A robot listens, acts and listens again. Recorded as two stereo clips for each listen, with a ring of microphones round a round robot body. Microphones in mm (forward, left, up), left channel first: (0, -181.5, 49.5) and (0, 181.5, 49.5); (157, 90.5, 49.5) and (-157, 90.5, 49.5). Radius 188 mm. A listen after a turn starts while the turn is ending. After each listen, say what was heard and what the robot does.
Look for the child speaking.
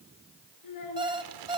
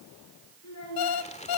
The child speaking: 50° right. Turn 50° right.
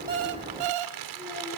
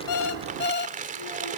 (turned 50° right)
Keep listening.
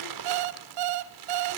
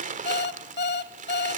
Keep listening.
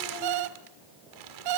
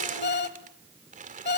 Facing where the child speaking came from. I can't hear it now.